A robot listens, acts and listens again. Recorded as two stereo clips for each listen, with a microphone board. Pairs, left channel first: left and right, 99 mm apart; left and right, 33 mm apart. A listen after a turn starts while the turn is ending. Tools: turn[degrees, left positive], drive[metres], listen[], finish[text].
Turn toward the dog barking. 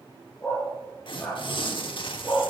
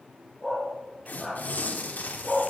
Action: turn[30]
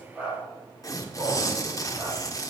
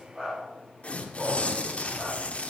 Action: listen[]
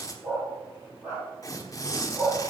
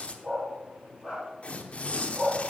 Thought: So it is at 25° right.
Action: turn[-25]
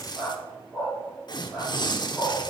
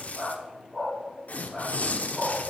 Thought: The dog barking is now 10° right.
Action: turn[-10]
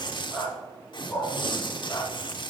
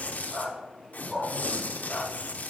Action: finish[Found it: a dog barking, straight ahead, over 4 m away.]